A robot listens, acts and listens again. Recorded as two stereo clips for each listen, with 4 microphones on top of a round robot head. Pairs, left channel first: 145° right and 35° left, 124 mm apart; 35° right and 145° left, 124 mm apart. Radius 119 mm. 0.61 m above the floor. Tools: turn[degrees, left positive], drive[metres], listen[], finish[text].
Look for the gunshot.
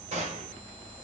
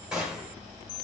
Thought: The gunshot: 60° left.
Action: turn[60]
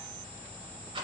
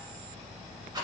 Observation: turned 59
Action: finish[Facing where the gunshot came from. I can't hear it now.]